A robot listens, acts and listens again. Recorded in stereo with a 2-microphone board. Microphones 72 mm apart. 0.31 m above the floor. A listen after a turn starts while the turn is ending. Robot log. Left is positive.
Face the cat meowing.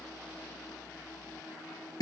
cmd idle
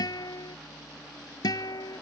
cmd idle
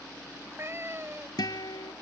note: The cat meowing: about 35° right or 145° right.
cmd yaw -35
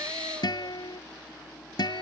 cmd idle
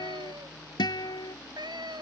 note: So it is at 100° right.
cmd yaw -100
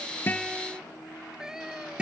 end: Facing the cat meowing.